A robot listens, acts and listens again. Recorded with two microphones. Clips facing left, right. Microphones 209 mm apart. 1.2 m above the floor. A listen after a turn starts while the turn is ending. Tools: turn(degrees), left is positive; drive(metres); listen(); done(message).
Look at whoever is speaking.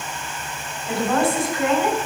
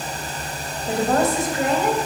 turn(degrees=-45)
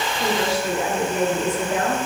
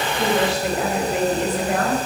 turn(degrees=-80)
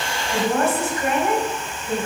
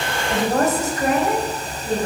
turn(degrees=-40)
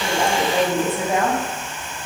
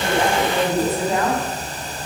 turn(degrees=15)
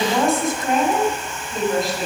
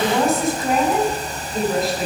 done("Found it: a woman speaking, straight ahead.")